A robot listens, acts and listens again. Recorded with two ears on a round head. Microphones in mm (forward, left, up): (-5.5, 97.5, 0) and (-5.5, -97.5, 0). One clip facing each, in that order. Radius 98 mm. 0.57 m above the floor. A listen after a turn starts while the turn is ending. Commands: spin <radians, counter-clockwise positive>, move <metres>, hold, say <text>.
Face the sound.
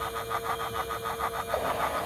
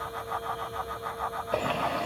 spin -0.70
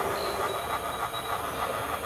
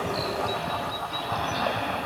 spin -1.83
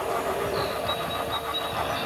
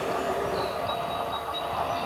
spin 0.26
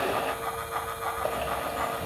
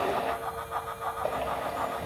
say Found it: a bird, straight ahead.